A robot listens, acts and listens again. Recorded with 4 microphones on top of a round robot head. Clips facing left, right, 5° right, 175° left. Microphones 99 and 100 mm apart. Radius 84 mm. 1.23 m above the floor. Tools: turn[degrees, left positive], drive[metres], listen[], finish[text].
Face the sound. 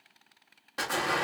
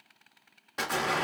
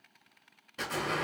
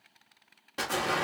Thought: The explosion: 175° left.
Action: turn[175]
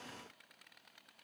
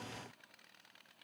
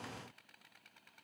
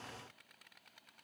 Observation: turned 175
Action: finish[Facing where the explosion came from. I can't hear it now.]